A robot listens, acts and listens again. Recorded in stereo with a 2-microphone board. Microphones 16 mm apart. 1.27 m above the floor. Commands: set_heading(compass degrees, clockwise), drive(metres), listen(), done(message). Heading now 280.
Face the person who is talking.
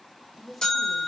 set_heading(250)
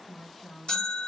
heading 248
set_heading(108)
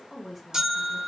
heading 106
done("Found it: a woman speaking, straight ahead, 1 to 2 m away.")